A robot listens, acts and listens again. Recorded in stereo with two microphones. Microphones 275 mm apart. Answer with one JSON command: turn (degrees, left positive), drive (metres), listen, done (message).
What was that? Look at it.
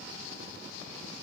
{"listen": true}
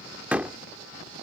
{"turn": -30}
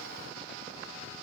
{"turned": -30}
{"listen": true}
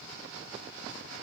{"done": "I heard a door slam, but can't make it out now. It was about 25° left or 145° right."}